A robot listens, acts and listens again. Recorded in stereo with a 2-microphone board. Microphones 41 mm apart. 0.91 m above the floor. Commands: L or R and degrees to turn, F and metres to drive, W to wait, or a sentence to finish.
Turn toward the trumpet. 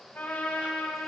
L50
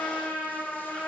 L80
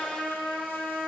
L25
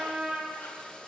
R20
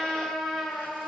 Found it: a trumpet, straight ahead, over 4 m away.